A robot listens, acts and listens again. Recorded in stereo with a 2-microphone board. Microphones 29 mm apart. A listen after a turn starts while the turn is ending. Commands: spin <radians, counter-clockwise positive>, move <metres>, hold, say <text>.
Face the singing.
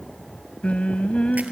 spin 0.79
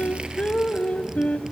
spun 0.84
spin 1.40
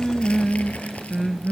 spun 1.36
say Found it: singing, straight ahead.